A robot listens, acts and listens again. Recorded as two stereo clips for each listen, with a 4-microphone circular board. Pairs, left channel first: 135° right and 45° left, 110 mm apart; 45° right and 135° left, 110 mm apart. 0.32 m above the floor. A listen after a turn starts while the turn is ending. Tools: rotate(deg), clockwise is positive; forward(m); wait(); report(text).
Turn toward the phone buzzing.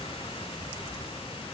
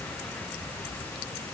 wait()
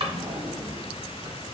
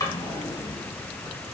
wait()
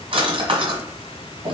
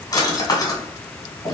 report("I can't make out a phone buzzing, only a drawer.")